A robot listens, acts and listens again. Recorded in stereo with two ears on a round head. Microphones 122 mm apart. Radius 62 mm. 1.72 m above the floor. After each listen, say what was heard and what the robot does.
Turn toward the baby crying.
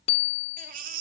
The baby crying: about 60° right or 120° right. Turn 60° right.
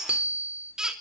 Found it: a baby crying, straight ahead, 2 to 4 m away.